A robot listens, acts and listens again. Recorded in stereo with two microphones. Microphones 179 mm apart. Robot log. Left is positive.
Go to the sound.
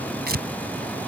note: The tearing paper: about 65° right or 115° right.
cmd yaw -65
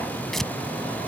cmd fwd 1.0
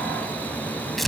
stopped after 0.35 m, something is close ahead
end: Something is in my way. I am facing the tearing paper but have not reached it.